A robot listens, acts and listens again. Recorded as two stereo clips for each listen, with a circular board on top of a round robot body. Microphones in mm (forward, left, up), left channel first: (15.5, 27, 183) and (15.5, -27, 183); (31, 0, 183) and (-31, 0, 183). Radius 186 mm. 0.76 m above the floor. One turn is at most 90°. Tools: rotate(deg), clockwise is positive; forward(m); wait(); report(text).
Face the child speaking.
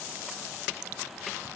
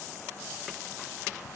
wait()
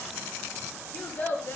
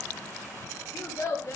rotate(-40)
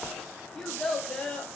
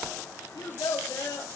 rotate(-20)
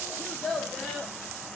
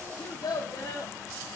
rotate(-15)
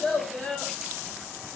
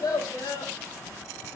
rotate(-15)
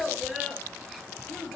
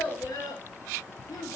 report("Facing the child speaking.")